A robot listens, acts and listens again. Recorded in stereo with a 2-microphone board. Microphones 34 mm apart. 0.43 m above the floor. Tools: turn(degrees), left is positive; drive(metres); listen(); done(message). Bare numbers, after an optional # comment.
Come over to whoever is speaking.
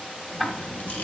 turn(90)
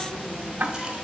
# So it is at 15° left.
turn(15)
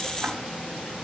drive(1.0)
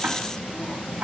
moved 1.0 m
# The child speaking is now 15° left.
turn(15)
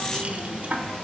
drive(1.0)
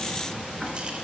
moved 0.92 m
drive(1.0)
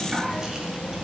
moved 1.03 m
drive(1.0)
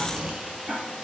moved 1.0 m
# The child speaking is now 20° right.
turn(-20)
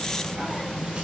drive(1.0)
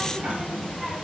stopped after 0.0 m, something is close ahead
done("I am next to the child speaking.")